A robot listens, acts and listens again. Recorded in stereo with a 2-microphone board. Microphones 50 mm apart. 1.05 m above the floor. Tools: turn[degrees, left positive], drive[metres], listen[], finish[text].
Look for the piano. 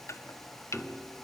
Action: turn[30]
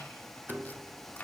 Thought: So it is at 35° right.
Action: turn[-35]
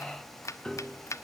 Thought: The piano is now 15° left.
Action: turn[15]
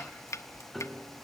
Action: finish[Found it: a piano, straight ahead.]